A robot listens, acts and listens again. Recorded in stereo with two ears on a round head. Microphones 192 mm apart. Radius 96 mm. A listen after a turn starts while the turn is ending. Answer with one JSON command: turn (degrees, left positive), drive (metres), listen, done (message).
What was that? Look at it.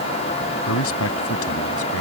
{"turn": 75}
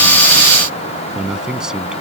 {"done": "Facing the man speaking."}